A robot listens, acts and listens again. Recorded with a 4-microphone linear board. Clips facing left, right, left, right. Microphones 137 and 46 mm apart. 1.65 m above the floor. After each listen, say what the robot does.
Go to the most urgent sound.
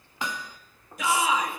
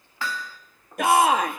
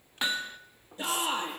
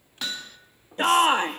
Turn 60° right.
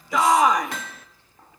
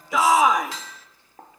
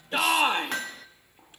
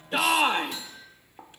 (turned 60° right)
Drive 1.0 m forward.
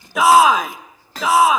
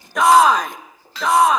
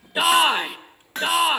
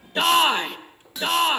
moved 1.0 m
Drive 1.0 m forward.
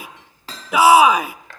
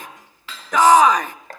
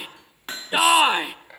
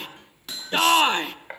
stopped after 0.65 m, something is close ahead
Turn 10° left.
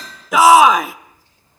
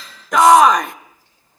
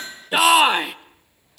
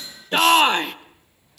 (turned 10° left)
Arrived at the shout, straight ahead.